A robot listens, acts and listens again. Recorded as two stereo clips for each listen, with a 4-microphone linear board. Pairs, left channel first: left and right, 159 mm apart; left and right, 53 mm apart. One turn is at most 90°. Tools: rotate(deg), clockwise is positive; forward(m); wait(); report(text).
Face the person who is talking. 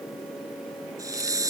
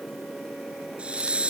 wait()
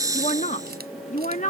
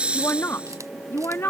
rotate(-50)
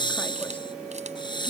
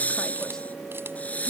wait()
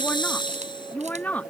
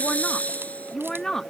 rotate(-10)
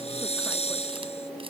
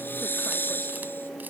wait()
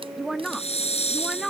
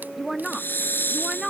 report("Found it: a woman speaking, straight ahead.")